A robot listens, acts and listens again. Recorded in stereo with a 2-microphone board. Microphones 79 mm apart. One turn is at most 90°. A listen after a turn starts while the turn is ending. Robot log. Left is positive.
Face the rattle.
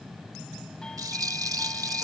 note: The rattle: about 50° right or 130° right.
cmd yaw -50
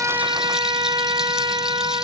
cmd idle
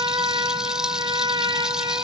cmd idle
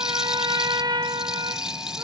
note: So it is at 10° right.
cmd yaw -10
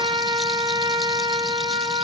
cmd idle
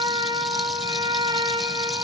cmd idle
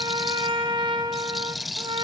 end: Found it: a rattle, straight ahead.